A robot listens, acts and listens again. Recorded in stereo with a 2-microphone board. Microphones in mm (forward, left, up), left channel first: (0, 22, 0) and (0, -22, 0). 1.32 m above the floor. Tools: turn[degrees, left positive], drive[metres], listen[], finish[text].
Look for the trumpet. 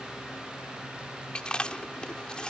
Action: listen[]
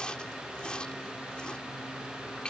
Action: listen[]
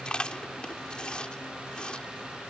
Action: finish[I can't make out a trumpet, only chewing.]